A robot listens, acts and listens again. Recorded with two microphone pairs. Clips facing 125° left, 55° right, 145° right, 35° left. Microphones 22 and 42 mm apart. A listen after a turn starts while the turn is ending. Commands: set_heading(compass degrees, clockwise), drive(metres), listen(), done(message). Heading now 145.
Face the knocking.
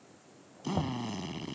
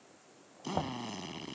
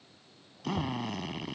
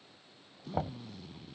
done("Facing the knocking.")